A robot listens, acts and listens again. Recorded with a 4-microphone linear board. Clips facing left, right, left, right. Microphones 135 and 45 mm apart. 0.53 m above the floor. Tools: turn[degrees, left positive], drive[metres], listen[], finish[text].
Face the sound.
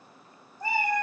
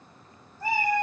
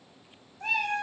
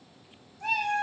Action: turn[30]
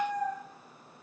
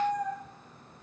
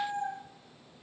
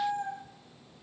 Thought: So it is at 15° right.
Action: turn[-15]
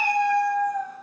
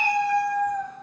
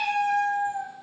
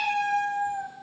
Action: finish[Facing the cat meowing, 1 to 2 m away.]